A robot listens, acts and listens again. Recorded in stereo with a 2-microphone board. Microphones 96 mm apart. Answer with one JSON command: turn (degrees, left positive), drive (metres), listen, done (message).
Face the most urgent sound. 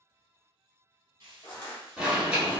{"turn": -30}
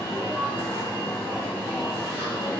{"turn": 20}
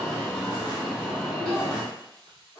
{"done": "Facing the alarm, 1 to 2 m away."}